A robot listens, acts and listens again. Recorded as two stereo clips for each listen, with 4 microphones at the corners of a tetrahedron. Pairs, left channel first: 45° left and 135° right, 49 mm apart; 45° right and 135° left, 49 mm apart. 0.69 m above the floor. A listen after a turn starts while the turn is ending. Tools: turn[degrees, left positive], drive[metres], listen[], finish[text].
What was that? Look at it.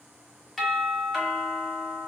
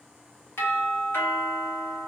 Thought: The doorbell: 40° right.
Action: turn[-40]
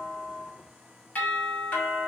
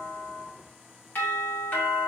Action: finish[Facing the doorbell, 1 to 2 m away.]